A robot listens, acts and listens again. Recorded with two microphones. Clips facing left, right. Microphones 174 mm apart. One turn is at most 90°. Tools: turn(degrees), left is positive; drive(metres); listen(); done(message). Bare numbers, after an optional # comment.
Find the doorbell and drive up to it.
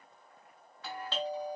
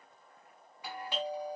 turn(-30)
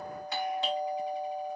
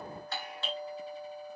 # So it is at 15° left.
turn(15)
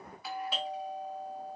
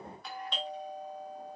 drive(1.0)
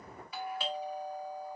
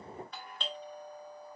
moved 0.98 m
# The doorbell is now 10° left.
turn(10)
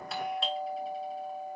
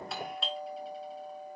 drive(1.0)
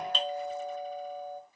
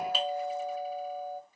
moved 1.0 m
# The doorbell is now 10° right.
turn(-10)
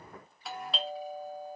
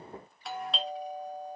drive(1.0)
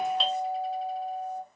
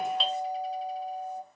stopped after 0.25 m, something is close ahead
done("Arrived at the doorbell, straight ahead.")